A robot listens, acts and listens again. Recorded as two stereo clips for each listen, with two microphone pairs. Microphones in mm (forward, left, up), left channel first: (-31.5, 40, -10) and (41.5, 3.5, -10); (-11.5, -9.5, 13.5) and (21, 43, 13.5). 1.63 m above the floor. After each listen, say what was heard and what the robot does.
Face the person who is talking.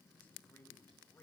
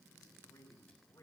The man speaking: 140° right. Turn 140° right.
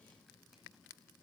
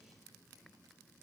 Keep listening.
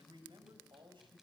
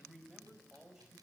The man speaking is now 20° right. Turn 20° right.
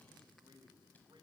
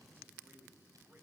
Found it: a man speaking, straight ahead.